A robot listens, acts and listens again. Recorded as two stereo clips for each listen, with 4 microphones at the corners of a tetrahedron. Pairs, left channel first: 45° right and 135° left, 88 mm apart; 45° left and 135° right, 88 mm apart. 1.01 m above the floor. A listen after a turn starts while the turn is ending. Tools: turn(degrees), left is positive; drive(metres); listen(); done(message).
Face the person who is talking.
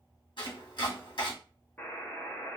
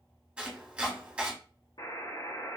listen()
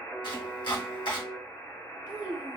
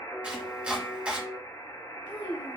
turn(degrees=65)
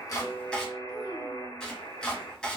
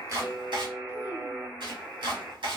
listen()
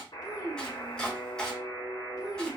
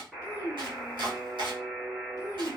done("Found it: a child speaking, straight ahead.")